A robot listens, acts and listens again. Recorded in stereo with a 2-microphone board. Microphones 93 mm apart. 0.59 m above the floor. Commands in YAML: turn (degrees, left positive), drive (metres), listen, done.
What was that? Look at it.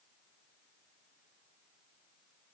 listen: true
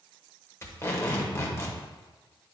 turn: 30
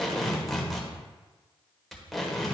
done: "Facing the tape being pulled, 1 to 2 m away."